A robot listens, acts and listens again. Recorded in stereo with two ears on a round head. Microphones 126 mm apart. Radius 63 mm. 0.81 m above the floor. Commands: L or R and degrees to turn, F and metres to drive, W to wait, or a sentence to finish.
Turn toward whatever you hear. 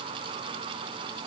W
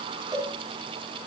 R25
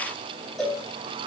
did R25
Found it: a cowbell, straight ahead, over 4 m away.